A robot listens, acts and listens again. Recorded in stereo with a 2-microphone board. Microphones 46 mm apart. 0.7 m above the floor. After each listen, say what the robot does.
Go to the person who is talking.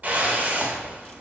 Keep listening.
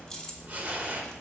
Keep listening.
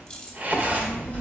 Turn 30° left.
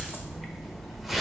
Drive 1.0 m forward.
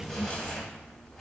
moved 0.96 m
Turn 10° right.
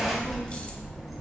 Drive 1.0 m forward.
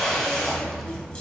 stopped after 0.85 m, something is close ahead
I am next to the child speaking.